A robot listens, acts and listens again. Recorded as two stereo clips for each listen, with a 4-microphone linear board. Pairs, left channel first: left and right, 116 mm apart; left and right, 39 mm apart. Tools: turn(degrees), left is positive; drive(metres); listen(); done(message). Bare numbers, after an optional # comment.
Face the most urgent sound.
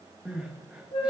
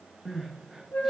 turn(-30)
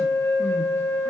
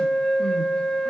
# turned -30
listen()
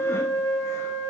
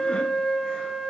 listen()
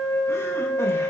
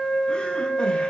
done("I heard crying, but can't make it out now. It was about 20° left or 140° right.")